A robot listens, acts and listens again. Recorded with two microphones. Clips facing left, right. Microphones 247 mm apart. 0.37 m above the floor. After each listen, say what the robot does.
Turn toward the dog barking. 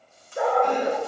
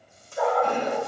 Turn 60° left.
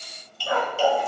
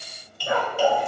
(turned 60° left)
Turn 30° right.
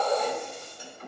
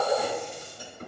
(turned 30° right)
Turn 15° right.
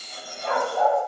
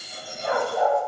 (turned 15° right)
Turn 15° right.
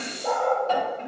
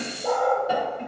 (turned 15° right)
Facing the dog barking, over 4 m away.